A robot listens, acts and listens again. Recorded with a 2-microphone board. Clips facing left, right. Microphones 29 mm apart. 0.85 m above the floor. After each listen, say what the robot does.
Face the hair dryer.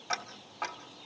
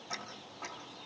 Keep listening.
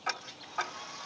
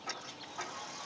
Turn 25° left.
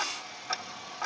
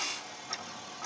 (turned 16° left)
Turn 140° left.
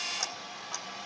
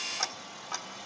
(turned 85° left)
Turn 50° left.
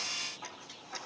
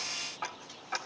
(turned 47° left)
Keep listening.
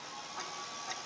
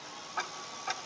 Found it: a hair dryer, straight ahead.